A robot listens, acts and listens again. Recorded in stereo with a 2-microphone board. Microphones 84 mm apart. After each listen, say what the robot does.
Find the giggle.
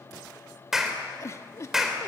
Turn 40° left.
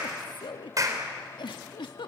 Turn 100° left.
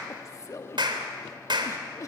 Turn 40° left.
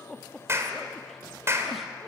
Found it: a giggle, straight ahead.